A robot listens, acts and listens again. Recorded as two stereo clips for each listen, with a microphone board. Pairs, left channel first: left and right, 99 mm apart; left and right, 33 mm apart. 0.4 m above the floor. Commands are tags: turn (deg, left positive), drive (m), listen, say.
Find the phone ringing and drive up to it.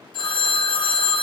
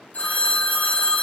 <turn deg="55"/>
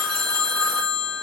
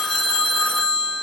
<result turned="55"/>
<drive m="1.0"/>
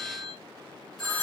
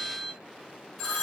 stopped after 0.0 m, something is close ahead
<say>Something is in my way. I am facing the phone ringing but have not reached it.</say>